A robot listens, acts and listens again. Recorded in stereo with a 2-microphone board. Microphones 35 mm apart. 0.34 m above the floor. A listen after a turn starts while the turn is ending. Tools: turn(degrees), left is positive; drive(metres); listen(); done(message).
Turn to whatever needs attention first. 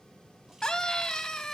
turn(degrees=20)
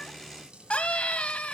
turn(degrees=140)
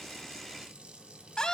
turn(degrees=25)
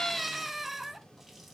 done("Facing the scream, 1 to 2 m away.")